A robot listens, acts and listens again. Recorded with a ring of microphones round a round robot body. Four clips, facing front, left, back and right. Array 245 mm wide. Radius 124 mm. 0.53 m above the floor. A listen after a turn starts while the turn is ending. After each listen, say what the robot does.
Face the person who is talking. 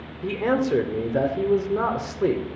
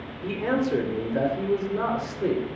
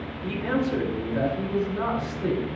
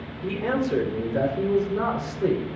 Facing the man speaking, 1 to 2 m away.